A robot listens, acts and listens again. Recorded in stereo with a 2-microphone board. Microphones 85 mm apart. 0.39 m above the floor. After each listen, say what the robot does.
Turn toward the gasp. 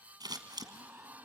Turn 25° right.
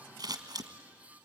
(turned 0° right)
Keep listening.
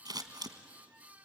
I heard a gasp, but can't make it out now. It was about 25° right or 155° right.